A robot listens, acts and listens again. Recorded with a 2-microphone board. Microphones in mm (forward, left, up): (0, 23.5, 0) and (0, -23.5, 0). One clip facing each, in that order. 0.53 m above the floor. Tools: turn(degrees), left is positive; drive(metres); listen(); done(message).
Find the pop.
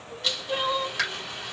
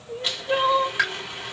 turn(degrees=-15)
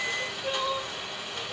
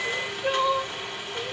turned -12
listen()
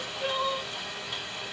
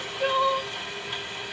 done("I heard a pop, but can't make it out now. It was about 5° right or 150° right.")